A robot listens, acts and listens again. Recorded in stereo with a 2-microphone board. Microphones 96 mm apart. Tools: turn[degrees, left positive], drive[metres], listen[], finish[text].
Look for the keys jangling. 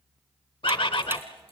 Action: listen[]
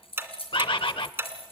Thought: The keys jangling: about 70° left or 110° left.
Action: turn[70]
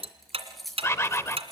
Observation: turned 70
Action: finish[Facing the keys jangling, over 4 m away.]